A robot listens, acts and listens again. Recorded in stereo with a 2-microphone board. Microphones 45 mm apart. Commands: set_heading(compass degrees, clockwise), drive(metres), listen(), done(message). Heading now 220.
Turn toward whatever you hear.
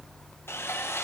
set_heading(155)
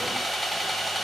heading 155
done("Facing the sawing, under 1 m away.")